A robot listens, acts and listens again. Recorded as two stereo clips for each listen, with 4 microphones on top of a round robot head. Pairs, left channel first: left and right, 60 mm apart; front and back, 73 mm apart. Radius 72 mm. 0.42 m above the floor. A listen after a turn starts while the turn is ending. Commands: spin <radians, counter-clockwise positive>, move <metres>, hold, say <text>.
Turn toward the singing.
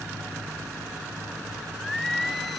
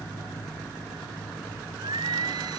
spin 3.14
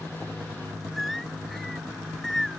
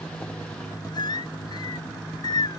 say Facing the singing.